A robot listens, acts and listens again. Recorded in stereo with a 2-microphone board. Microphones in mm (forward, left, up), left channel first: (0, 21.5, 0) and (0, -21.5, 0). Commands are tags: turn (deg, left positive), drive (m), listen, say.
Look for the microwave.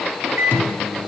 <turn deg="-60"/>
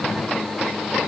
<listen/>
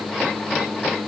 <turn deg="-65"/>
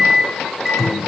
<turn deg="-10"/>
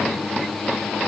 <say>Found it: a microwave, straight ahead, 2 to 4 m away.</say>